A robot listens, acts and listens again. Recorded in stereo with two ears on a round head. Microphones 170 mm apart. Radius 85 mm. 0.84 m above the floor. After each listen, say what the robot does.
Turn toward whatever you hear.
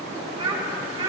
Turn 25° right.
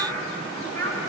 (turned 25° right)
Turn 10° left.
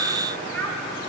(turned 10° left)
Turn 10° left.
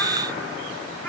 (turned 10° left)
Keep listening.
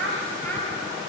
Turn 10° left.
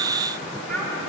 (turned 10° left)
Facing the child speaking.